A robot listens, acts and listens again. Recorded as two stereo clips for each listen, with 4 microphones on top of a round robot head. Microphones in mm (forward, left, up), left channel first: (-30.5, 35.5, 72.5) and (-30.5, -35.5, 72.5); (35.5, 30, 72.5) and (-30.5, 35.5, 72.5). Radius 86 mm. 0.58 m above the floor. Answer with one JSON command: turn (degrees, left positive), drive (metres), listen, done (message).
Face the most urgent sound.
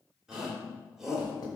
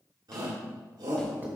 {"turn": -170}
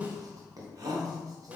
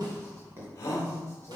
{"turn": -50}
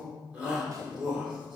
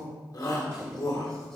{"turn": -15}
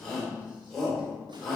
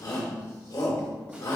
{"done": "Facing the shout, 2 to 4 m away."}